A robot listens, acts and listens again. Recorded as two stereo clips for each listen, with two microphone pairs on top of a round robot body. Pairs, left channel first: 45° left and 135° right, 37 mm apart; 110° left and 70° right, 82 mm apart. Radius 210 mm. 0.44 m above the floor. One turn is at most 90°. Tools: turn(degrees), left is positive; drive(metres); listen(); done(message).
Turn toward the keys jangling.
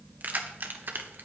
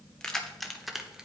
turn(degrees=-90)
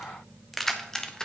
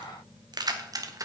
turn(degrees=-25)
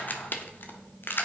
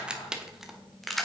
turn(degrees=25)
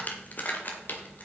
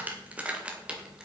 turn(degrees=10)
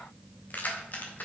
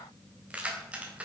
done("Found it: keys jangling, straight ahead, 2 to 4 m away.")